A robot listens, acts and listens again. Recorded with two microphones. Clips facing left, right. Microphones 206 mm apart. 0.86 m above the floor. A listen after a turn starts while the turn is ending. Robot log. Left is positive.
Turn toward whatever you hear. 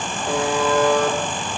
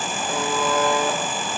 note: The buzzer: about 70° left or 110° left.
cmd yaw +70
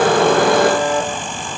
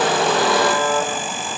note: So it is at 40° left.
cmd yaw +40
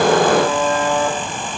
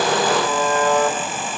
note: The buzzer is now 10° left.
cmd yaw +10
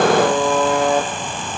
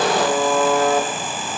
end: Facing the buzzer.